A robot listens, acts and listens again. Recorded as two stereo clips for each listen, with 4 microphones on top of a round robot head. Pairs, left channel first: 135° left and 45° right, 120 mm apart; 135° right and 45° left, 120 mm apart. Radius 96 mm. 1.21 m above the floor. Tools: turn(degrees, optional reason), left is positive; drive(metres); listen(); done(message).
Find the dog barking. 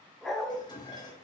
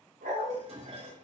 turn(degrees=45, reason="The dog barking: 45° left.")
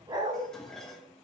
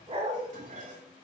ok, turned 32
done("Found it: a dog barking, straight ahead.")